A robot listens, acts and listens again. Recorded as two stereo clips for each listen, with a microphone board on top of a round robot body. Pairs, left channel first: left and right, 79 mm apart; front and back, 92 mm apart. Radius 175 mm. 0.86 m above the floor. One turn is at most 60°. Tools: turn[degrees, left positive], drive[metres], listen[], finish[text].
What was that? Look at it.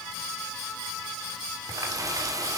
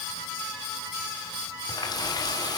Thought: The running tap: 45° right.
Action: turn[-45]
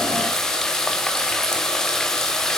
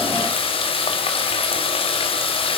Thought: The running tap is now 10° left.
Action: turn[10]
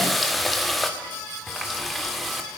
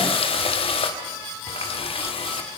Action: finish[Facing the running tap, 2 to 4 m away.]